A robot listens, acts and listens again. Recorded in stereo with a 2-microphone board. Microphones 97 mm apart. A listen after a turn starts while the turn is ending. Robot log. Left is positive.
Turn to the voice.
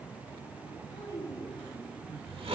note: The child speaking: about 35° left or 145° left.
cmd yaw +35
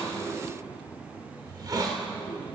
cmd idle
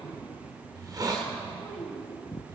end: Facing the child speaking, 2 to 4 m away.